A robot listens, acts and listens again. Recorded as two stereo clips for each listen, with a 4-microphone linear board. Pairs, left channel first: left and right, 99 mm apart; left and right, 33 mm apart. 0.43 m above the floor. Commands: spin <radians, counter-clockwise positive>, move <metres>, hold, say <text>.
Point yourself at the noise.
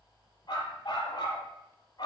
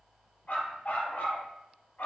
spin 0.87
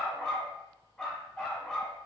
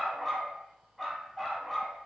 say Facing the dog barking, 1 to 2 m away.